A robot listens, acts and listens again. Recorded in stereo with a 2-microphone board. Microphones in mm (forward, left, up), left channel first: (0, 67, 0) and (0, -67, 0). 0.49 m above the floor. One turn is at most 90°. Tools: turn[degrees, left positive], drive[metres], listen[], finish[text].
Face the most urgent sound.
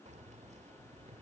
Action: listen[]
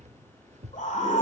Thought: The scream: about 70° left or 110° left.
Action: turn[70]
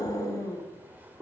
Thought: So it is at 30° left.
Action: turn[30]
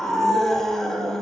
Action: finish[Facing the scream, over 4 m away.]